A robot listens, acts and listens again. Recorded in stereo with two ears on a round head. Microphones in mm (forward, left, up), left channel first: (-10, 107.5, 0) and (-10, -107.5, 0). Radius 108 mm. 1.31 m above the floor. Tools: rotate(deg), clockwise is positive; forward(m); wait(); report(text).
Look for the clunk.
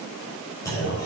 rotate(-30)
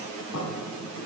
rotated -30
wait()
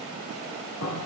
report("I heard a clunk, but can't make it out now. It was about 15° right or 135° left.")